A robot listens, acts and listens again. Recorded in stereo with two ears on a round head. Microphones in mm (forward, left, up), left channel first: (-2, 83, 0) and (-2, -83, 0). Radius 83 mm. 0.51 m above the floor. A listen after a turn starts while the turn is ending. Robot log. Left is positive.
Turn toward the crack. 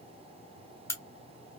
note: The crack: about 15° left or 165° left.
cmd yaw +15
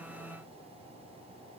cmd idle
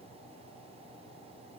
end: I heard a crack, but can't make it out now. It was about straight ahead or 150° left.